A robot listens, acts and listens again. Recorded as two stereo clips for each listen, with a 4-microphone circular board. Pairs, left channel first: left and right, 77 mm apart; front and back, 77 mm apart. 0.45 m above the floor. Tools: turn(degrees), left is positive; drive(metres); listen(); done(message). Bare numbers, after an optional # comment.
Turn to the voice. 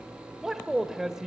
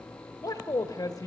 done("Facing the man speaking.")